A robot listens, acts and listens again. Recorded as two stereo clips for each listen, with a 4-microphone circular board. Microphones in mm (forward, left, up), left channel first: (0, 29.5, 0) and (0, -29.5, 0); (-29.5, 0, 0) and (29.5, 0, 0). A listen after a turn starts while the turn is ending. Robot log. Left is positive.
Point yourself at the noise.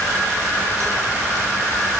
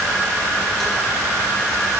cmd idle
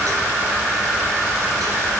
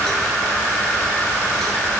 cmd idle
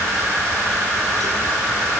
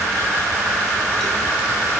end: I can't make out anything.